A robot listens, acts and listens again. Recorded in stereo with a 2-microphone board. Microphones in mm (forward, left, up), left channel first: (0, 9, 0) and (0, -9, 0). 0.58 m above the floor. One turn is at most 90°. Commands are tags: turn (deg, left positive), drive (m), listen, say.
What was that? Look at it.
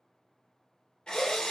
<turn deg="55"/>
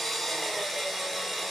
<say>Facing the drill, 1 to 2 m away.</say>